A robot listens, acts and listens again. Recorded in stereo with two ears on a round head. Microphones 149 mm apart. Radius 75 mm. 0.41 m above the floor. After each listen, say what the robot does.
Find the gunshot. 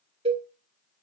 Keep listening.
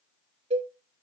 Keep listening.
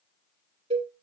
I can't make out a gunshot, only a cowbell.